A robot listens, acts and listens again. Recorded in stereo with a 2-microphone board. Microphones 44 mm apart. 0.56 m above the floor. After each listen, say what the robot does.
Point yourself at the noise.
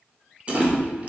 Turn 30° right.
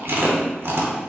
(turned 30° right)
Turn 120° right.
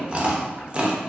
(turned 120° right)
Turn 30° right.
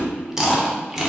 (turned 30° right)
Turn 15° right.
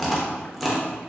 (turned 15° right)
Facing the chewing.